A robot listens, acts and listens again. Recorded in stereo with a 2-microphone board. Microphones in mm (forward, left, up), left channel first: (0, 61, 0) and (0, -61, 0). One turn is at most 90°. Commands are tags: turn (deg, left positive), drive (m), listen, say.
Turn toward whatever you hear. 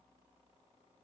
<listen/>
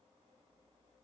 <listen/>
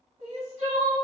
<turn deg="-70"/>
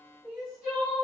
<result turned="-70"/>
<turn deg="-10"/>
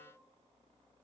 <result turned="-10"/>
<listen/>
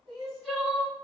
<say>Facing the crying, 1 to 2 m away.</say>